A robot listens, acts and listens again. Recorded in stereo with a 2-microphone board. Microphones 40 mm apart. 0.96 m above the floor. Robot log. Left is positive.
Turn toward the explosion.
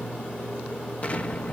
note: The explosion: about 35° left or 145° left.
cmd yaw +35
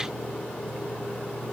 cmd idle
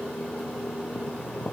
end: I heard an explosion, but can't make it out now. It was about straight ahead or 110° left.